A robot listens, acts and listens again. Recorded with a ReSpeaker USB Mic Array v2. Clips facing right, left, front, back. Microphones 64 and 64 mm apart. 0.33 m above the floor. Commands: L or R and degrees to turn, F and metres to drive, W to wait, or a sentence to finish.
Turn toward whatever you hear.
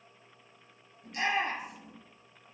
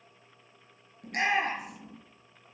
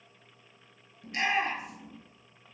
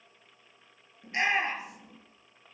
L115
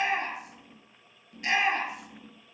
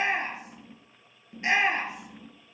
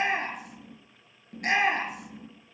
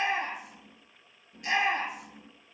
L25
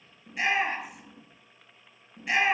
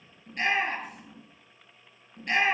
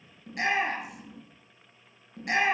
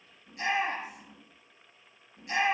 R10
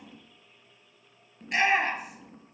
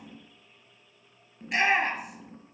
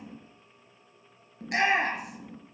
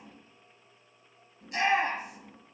Found it: a shout, straight ahead, over 4 m away.